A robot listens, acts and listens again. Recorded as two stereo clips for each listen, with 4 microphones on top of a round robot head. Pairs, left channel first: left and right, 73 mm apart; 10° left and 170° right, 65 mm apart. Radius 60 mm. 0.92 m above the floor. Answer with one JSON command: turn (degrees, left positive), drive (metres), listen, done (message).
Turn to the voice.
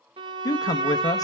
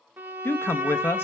{"turn": 60}
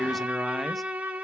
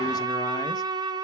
{"listen": true}
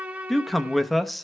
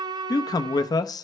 {"done": "Found it: a man speaking, straight ahead."}